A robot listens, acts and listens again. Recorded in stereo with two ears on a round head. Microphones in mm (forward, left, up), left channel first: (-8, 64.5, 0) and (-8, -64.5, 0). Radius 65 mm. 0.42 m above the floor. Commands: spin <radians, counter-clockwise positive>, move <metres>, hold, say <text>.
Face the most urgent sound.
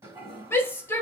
spin 0.35
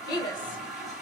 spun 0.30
spin 2.53
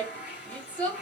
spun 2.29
spin 0.17
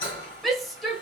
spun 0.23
say Facing the shout.